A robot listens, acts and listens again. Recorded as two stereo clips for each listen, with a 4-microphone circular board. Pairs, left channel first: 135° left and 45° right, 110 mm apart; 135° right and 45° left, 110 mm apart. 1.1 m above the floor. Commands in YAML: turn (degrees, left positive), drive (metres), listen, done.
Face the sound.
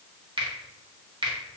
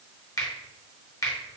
turn: -80
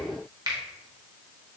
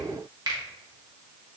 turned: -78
done: "Facing the finger snap."